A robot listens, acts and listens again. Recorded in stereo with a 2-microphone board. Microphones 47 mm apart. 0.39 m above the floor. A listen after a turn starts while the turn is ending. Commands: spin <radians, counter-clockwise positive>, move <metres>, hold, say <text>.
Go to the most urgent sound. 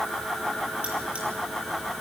hold
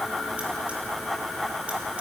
hold
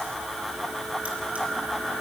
say I can't make out anything urgent to turn to.